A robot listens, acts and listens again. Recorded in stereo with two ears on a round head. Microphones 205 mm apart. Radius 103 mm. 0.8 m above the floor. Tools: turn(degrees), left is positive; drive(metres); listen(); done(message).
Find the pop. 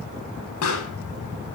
turn(degrees=70)
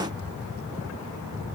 listen()
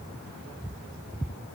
done("I heard a pop, but can't make it out now. It was about straight ahead or 40° left.")